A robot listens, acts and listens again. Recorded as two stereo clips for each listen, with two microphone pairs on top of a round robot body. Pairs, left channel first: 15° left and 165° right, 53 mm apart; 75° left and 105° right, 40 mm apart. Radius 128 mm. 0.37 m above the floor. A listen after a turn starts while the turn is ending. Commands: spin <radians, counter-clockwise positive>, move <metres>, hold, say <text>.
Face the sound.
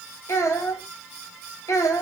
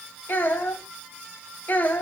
spin 0.70
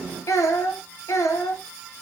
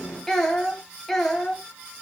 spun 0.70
say Found it: a child speaking, straight ahead, 2 to 4 m away.